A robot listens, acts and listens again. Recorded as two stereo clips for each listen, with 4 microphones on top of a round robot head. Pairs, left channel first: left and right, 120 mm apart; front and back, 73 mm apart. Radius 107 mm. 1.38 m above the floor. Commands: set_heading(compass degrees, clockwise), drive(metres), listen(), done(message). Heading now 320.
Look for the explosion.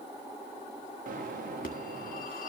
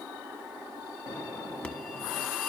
set_heading(25)
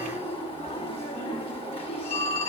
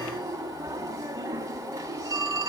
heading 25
done("Facing where the explosion came from. I can't hear it now.")